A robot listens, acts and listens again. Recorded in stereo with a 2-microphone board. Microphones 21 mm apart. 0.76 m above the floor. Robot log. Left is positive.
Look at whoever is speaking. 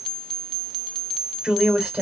note: The woman speaking: about 65° right or 115° right.
cmd yaw -65
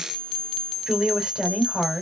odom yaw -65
note: So it is at 45° right.
cmd yaw -45
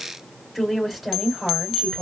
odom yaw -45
end: Found it: a woman speaking, straight ahead.